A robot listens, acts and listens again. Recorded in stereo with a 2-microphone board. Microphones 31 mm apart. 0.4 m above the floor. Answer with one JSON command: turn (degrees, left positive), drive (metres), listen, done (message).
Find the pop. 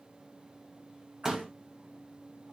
{"turn": -15}
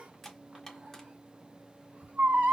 {"listen": true}
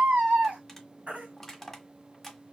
{"done": "I heard a pop, but can't make it out now. It was about straight ahead or 150° right."}